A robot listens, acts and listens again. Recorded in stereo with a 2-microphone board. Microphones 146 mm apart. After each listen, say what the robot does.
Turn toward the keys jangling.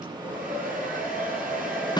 Keep listening.
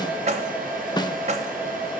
Turn 50° right.
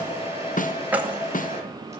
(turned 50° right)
Turn 10° right.
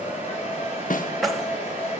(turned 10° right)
Found it: keys jangling, straight ahead.